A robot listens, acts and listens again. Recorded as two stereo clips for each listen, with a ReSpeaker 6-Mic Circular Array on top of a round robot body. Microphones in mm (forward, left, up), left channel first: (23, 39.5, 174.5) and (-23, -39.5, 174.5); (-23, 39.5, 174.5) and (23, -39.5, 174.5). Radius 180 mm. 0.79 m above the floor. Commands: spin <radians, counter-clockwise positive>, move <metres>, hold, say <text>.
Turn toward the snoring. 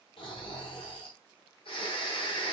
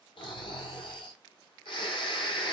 spin 1.48
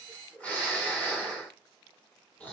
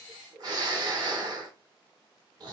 spin -0.26
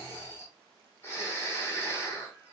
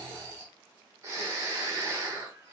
say Facing the snoring.